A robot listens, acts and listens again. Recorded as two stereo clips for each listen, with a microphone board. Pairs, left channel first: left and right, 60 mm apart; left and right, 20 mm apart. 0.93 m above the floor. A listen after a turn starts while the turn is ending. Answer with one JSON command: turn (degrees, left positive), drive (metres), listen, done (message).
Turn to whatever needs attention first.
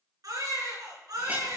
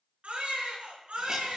{"turn": -90}
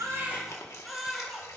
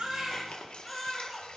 {"done": "Found it: a baby crying, straight ahead."}